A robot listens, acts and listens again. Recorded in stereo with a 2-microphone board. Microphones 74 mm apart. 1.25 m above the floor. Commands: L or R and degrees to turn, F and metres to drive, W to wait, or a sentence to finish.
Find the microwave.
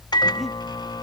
L75
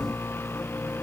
L35
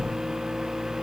Found it: a microwave, straight ahead.